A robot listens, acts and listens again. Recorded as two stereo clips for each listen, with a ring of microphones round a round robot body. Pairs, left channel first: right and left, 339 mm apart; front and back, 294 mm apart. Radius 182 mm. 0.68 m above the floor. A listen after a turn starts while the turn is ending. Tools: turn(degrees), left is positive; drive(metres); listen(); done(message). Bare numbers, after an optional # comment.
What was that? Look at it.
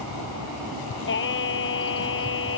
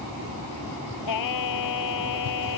# The singing: 35° right.
turn(-35)
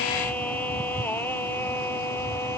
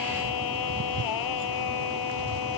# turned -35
done("Found it: singing, straight ahead.")